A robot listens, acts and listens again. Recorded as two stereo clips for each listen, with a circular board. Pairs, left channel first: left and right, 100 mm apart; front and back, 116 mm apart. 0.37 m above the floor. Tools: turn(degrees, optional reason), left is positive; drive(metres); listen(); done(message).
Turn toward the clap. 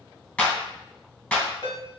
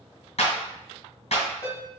turn(degrees=20, reason="The clap: 20° left.")
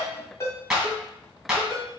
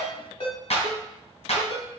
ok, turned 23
done("Found it: a clap, straight ahead, 2 to 4 m away.")